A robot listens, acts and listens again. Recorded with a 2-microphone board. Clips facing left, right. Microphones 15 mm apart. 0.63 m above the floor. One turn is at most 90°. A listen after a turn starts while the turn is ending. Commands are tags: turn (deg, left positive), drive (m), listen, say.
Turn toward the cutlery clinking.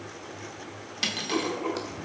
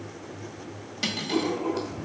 <turn deg="25"/>
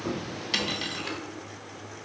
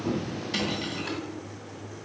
<turn deg="90"/>
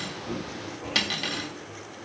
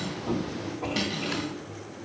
<turn deg="70"/>
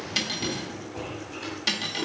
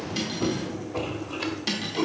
<turn deg="10"/>
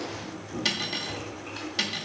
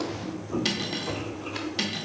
<say>Facing the cutlery clinking.</say>